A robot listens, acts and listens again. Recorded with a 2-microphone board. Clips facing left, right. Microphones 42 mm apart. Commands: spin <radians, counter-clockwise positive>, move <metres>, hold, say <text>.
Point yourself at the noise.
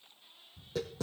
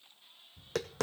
spin -1.57
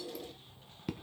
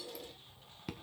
say Facing the tapping.